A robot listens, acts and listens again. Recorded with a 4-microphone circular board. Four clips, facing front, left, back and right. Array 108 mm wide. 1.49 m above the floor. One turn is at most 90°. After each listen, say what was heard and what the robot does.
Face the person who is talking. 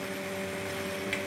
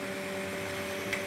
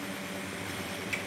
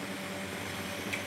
Keep listening.
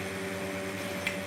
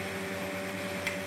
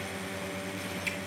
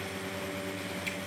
Keep listening.
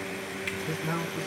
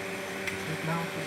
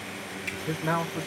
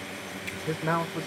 The man speaking: 115° right. Turn 90° right.
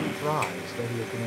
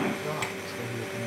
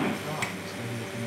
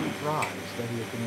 The man speaking is now 35° right. Turn 35° right.
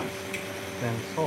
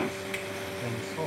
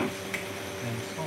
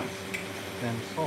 The man speaking is now 15° right. Turn 15° right.
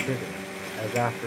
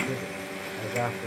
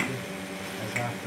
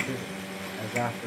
Found it: a man speaking, straight ahead.